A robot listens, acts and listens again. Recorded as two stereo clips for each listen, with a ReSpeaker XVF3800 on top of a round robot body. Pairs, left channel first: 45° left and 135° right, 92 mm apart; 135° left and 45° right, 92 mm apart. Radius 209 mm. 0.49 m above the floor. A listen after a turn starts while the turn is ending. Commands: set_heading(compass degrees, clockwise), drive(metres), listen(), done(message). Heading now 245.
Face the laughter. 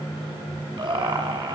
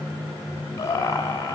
set_heading(50)
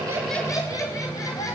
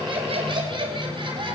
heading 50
set_heading(60)
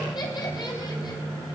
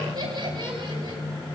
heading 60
done("Facing the laughter, over 4 m away.")